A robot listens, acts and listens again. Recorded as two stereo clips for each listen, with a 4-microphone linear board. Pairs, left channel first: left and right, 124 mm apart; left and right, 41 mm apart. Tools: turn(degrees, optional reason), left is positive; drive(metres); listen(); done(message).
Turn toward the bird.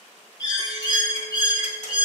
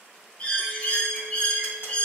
turn(degrees=35, reason="The bird: about 35° left or 145° left.")
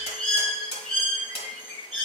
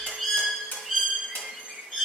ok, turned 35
turn(degrees=10, reason="So it is at 10° left.")
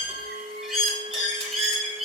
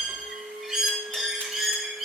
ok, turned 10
done("Found it: a bird, straight ahead.")